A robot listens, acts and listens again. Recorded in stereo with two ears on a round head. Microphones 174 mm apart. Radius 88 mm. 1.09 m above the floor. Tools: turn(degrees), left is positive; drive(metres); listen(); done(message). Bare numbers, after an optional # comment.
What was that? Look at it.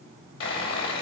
# The sawing: about 75° left or 105° left.
turn(75)
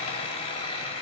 # So it is at 30° left.
turn(30)
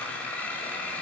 # The sawing is now 10° left.
turn(10)
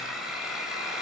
done("Facing the sawing.")